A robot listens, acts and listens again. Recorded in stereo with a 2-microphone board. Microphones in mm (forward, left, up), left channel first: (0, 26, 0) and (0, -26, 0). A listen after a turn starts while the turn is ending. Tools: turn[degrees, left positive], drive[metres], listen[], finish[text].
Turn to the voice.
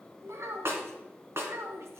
Thought: The child speaking: about 70° right or 110° right.
Action: turn[-70]
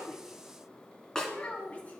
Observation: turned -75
Thought: So it is at 30° left.
Action: turn[30]
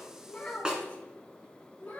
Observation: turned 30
Thought: The child speaking is now 25° left.
Action: turn[25]
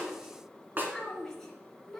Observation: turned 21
Action: finish[Found it: a child speaking, straight ahead, 2 to 4 m away.]